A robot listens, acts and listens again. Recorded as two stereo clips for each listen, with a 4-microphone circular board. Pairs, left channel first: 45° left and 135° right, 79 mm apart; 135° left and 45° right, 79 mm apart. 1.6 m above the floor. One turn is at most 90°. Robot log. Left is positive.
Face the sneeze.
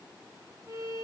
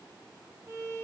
cmd idle
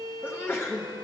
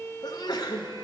note: The sneeze: 105° left.
cmd yaw +90
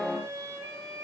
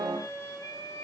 note: Nothing new. It was at 15° left.
cmd yaw +15
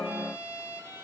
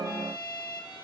end: Facing where the sneeze came from. I can't hear it now.